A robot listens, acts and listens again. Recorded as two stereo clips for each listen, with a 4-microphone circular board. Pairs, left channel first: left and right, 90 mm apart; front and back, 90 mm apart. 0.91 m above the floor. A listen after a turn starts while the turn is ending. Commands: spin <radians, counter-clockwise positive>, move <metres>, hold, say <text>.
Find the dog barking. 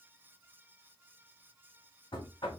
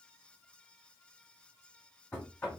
hold
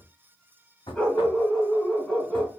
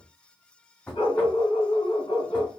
spin 0.17
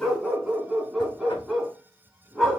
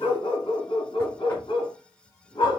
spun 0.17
say Facing the dog barking.